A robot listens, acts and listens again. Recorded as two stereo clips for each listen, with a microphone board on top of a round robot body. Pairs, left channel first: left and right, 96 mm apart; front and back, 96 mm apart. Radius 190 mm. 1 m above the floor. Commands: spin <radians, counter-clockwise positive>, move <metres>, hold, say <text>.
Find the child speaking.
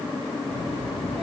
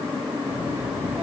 spin -1.83
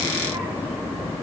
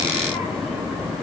spin -0.44
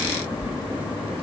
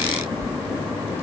spin -0.17
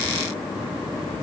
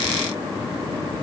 say Facing the child speaking.